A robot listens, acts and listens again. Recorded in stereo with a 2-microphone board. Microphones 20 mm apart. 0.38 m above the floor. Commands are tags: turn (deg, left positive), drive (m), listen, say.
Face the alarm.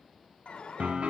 <turn deg="65"/>
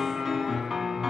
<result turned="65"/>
<listen/>
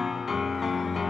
<listen/>
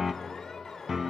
<turn deg="30"/>
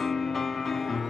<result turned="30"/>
<listen/>
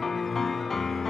<listen/>
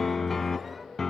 <say>Facing where the alarm came from. I can't hear it now.</say>